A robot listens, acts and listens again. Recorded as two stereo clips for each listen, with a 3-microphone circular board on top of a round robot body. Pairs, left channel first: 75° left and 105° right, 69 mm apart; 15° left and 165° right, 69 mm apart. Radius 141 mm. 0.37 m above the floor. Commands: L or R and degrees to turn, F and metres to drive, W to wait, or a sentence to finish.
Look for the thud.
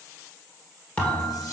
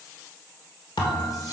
Found it: a thud, straight ahead, 1 to 2 m away.